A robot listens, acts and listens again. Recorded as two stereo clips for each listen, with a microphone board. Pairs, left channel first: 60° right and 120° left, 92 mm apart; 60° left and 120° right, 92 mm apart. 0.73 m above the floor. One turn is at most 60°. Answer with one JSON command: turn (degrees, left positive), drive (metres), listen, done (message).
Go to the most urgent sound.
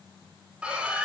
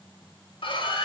{"turn": 45}
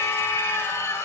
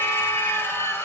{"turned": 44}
{"drive": 1.0}
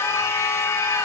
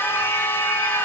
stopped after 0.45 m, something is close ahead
{"done": "Something is in my way. I am facing the scream but have not reached it."}